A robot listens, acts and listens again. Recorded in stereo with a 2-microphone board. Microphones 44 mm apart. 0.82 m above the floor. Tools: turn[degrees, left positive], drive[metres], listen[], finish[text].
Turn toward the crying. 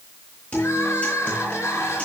Action: turn[90]
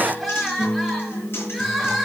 Action: finish[Facing the crying, over 4 m away.]